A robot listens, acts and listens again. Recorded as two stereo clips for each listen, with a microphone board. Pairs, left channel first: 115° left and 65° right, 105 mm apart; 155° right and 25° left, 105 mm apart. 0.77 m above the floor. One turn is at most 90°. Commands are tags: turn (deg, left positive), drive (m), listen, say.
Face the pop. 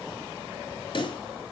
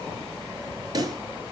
<turn deg="75"/>
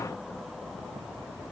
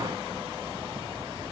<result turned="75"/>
<say>Facing where the pop came from. I can't hear it now.</say>